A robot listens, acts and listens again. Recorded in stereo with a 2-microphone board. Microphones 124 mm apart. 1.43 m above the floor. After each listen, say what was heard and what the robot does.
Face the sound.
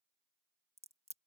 The crack: about 60° right or 120° right. Turn 60° right.
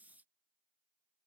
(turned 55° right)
Keep listening.
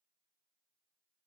I heard a crack, but can't make it out now. It was about 5° right or 65° right.